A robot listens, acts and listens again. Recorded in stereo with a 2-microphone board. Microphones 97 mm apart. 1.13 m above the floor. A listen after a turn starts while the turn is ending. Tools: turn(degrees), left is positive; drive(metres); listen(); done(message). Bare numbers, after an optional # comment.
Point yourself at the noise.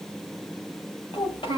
# The child speaking: about 60° left or 120° left.
turn(60)
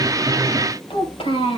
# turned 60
# So it is at 70° left.
turn(70)
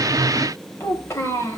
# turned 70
# The child speaking is now 30° left.
turn(30)
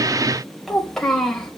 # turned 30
done("Found it: a child speaking, straight ahead.")